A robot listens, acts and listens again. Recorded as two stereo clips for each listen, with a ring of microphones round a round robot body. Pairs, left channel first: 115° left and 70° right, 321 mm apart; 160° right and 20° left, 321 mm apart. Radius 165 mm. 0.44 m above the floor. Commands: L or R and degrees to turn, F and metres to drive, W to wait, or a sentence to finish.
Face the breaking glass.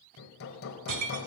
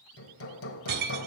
R35
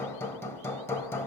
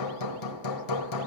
Facing where the breaking glass came from. I can't hear it now.